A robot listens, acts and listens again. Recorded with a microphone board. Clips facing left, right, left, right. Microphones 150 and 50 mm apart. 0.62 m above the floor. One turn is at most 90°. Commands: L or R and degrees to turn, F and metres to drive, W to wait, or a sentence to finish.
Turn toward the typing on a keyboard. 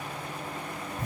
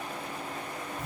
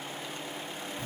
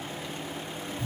W
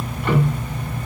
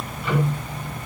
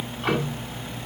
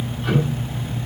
W
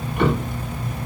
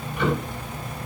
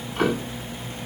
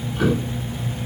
I can't make out typing on a keyboard, only ticking.